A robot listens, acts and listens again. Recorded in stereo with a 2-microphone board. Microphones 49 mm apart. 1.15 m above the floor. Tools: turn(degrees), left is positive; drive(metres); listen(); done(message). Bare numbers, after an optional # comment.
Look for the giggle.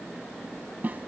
listen()
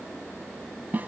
listen()
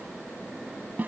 done("I can't make out a giggle, only a snare drum.")